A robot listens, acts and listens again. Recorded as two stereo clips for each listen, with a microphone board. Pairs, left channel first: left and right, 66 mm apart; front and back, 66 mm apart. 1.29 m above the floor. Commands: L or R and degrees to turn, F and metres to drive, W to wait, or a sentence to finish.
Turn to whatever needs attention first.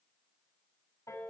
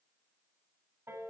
W
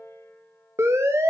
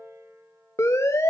R45
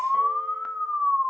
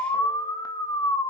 Facing the siren, 2 to 4 m away.